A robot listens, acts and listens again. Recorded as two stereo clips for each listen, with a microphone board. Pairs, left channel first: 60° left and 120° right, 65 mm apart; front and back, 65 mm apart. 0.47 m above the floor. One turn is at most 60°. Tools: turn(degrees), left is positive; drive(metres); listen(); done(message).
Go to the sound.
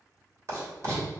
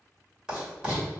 turn(degrees=-60)
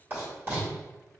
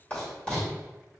turn(degrees=-60)
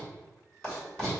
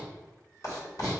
turn(degrees=-10)
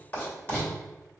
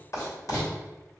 drive(metres=1.0)
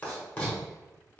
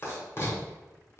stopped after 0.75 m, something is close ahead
turn(degrees=10)
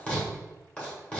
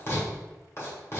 done("I am next to the writing.")